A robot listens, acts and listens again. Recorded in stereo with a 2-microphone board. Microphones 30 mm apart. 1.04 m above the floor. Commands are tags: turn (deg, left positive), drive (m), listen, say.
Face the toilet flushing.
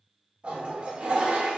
<turn deg="-35"/>
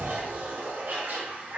<turn deg="-110"/>
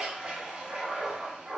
<turn deg="-35"/>
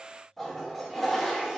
<say>Found it: a toilet flushing, straight ahead, 1 to 2 m away.</say>